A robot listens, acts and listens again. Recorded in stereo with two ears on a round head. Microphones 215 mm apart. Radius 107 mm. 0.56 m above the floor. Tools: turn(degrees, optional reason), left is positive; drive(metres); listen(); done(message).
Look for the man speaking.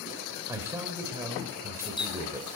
turn(degrees=-30)
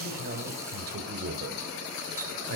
turn(degrees=-135, reason="So it is at 135° right.")
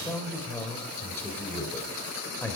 turn(degrees=10, reason="The man speaking is now 10° left.")
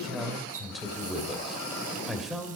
done("Found it: a man speaking, straight ahead.")